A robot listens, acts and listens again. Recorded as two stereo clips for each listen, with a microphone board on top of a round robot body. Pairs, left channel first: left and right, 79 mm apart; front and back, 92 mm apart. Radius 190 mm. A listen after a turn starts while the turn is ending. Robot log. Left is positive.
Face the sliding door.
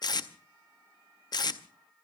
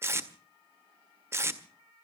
cmd idle
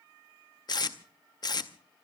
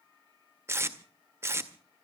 cmd idle
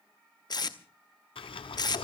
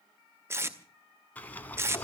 note: The sliding door: 75° left.
cmd yaw +75
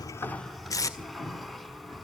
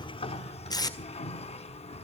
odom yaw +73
end: Facing the sliding door, 1 to 2 m away.